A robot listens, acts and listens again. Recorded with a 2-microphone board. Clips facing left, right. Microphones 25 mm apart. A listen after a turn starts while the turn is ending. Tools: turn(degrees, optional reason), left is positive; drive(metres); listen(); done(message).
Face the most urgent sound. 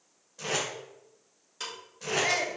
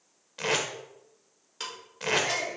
turn(degrees=35, reason="The shout: about 35° left or 145° left.")
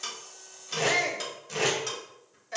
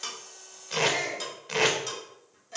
turn(degrees=105, reason="So it is at 105° left.")
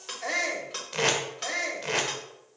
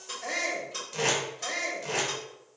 turn(degrees=15, reason="The shout is now 15° left.")
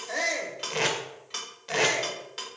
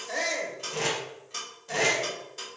turn(degrees=10, reason="The shout is now 10° left.")
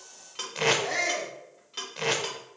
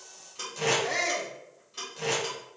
done("Facing the shout.")